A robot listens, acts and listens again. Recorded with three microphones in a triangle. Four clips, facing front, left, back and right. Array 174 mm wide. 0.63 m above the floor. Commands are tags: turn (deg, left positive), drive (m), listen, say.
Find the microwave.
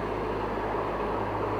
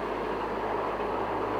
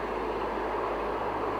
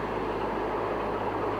<listen/>
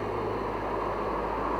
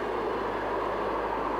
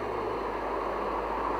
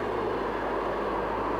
<listen/>
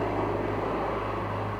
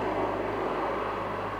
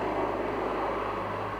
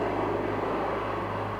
<say>I can't make out a microwave.</say>